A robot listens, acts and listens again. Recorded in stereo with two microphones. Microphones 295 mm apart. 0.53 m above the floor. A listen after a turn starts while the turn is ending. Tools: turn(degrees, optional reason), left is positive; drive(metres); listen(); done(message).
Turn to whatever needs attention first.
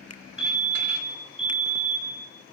turn(degrees=20, reason="The fire alarm: about 20° left or 160° left.")
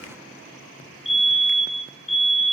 done("Facing the fire alarm.")